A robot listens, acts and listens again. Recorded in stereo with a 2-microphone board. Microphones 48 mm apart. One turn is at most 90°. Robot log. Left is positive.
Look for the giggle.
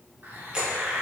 cmd idle
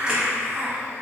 cmd idle
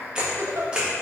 note: The giggle: about 70° right or 110° right.
cmd yaw -70
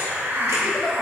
cmd idle
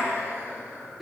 end: Found it: a giggle, straight ahead, under 1 m away.